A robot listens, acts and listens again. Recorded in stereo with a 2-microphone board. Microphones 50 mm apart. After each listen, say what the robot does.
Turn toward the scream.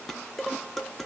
Keep listening.
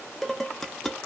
Keep listening.
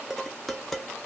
I can't make out a scream, only dishes clattering.